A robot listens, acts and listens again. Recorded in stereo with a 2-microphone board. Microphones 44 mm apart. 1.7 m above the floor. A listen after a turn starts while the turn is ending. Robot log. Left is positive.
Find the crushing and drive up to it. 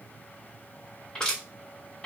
cmd yaw +30
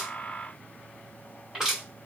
note: So it is at 15° right.
cmd yaw -15
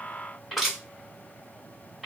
note: The crushing is now 10° right.
cmd yaw -10
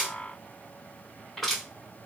cmd fwd 1.0
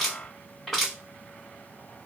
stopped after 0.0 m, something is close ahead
end: Blocked. The crushing is further on, straight ahead.